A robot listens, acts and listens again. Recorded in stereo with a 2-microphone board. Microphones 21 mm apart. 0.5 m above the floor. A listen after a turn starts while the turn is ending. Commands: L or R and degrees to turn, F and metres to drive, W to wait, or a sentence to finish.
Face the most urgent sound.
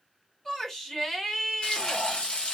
L25
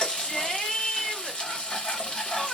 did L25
L130
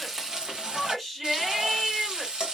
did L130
R10
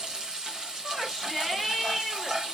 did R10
Facing the shout.